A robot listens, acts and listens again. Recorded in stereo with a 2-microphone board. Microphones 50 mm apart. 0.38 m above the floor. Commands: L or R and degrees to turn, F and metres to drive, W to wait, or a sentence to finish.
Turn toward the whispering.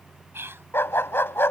R55
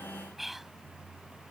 Found it: whispering, straight ahead.